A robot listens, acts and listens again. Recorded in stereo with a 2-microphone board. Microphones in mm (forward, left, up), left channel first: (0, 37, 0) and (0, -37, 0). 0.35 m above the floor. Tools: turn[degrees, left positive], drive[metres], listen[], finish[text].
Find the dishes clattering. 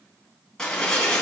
Action: turn[30]
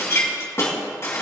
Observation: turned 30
Thought: So it is at 140° left.
Action: turn[140]
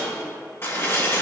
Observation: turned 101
Thought: The dishes clattering is now 40° left.
Action: turn[40]
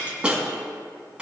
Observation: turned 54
Thought: The dishes clattering is now 15° right.
Action: turn[-15]
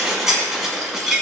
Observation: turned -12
Action: finish[Found it: dishes clattering, straight ahead.]